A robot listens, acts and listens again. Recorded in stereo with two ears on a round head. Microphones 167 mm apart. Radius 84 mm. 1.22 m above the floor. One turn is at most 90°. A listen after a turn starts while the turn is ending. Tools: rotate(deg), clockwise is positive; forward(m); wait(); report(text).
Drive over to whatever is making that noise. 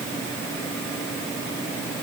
wait()
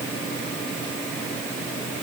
wait()
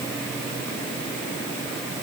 report("I can't make out anything.")